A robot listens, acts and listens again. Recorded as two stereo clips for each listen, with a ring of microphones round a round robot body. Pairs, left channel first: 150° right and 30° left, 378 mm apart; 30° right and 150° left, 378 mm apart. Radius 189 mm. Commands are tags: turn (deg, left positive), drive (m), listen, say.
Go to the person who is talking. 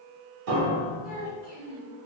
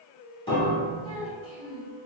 <drive m="1.0"/>
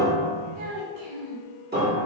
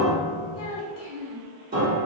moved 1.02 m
<turn deg="-10"/>
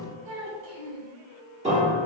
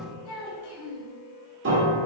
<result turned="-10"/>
<drive m="1.0"/>
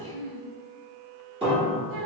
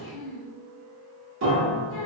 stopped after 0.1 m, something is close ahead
<say>Arrived at the child speaking, straight ahead.</say>